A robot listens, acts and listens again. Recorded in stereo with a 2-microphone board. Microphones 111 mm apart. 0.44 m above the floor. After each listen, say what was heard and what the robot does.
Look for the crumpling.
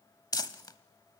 The crumpling: about 40° left or 140° left. Turn 40° left.
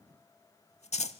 So it is at 100° left. Turn 100° left.
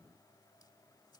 Keep listening.
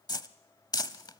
The crumpling is now 35° left. Turn 35° left.
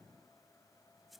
Keep listening.
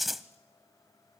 Facing the crumpling, under 1 m away.